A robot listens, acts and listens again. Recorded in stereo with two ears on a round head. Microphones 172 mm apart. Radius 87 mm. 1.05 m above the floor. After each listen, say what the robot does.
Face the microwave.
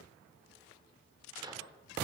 Turn 20° right.
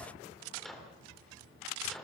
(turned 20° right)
Found it: a microwave, straight ahead, 2 to 4 m away.